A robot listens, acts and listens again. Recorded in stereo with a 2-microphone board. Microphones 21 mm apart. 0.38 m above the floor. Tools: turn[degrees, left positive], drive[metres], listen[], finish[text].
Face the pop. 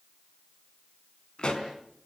Thought: The pop: about 45° left or 135° left.
Action: turn[45]
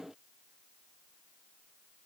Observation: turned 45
Action: listen[]
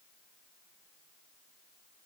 Action: finish[I heard a pop, but can't make it out now. It was about straight ahead or 90° left.]